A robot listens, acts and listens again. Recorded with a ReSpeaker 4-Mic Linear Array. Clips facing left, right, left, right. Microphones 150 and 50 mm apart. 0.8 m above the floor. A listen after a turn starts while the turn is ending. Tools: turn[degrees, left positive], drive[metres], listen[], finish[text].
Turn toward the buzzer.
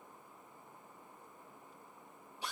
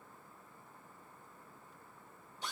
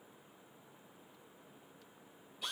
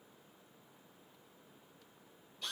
Action: listen[]
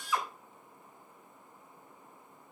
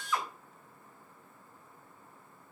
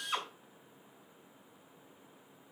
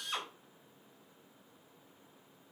Action: listen[]
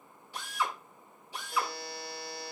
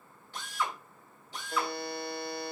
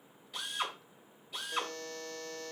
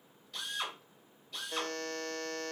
Thought: The buzzer: about 55° right or 125° right.
Action: turn[-55]
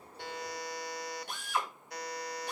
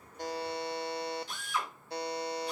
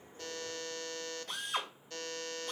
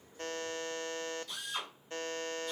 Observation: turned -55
Thought: So it is at 35° right.
Action: turn[-35]
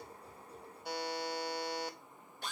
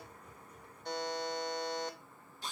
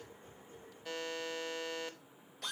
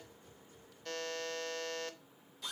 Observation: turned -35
Thought: The buzzer is now 10° left.
Action: turn[10]
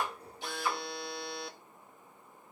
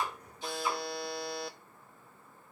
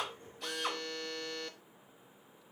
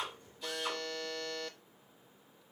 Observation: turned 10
Action: finish[Found it: a buzzer, straight ahead, under 1 m away.]